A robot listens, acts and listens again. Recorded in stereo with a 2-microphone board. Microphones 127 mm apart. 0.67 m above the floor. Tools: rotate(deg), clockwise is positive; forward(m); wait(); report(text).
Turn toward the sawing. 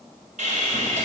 rotate(90)
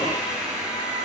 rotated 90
report("Facing the sawing, 2 to 4 m away.")